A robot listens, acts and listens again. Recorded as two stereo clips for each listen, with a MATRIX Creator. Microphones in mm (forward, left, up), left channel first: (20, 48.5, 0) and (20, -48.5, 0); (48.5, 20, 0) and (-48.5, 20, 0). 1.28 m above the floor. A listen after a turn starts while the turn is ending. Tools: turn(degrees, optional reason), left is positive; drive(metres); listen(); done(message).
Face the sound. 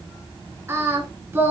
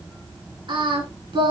turn(degrees=-155, reason="The singing: 155° right.")
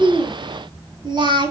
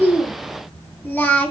turn(degrees=-70, reason="The singing is now 70° right.")
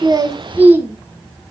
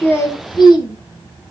turn(degrees=-25, reason="The singing is now 25° right.")
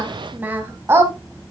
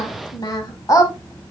turn(degrees=-40, reason="The singing is now 40° right.")
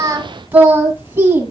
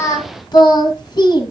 turn(degrees=-30, reason="The singing is now 30° right.")
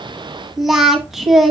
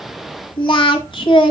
done("Facing the singing, 1 to 2 m away.")